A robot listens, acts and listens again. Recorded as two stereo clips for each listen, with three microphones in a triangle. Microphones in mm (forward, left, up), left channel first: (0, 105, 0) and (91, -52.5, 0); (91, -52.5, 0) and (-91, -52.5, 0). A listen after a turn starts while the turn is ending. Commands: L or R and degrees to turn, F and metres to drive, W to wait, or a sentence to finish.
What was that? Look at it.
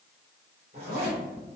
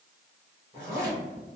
R55
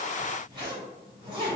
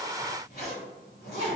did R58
Found it: a zipper, straight ahead, 1 to 2 m away.